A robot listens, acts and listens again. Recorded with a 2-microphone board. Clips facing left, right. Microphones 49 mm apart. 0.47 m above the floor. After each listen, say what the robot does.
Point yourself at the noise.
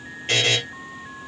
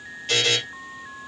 Turn 40° left.
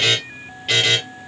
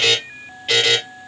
Facing the buzzer, 2 to 4 m away.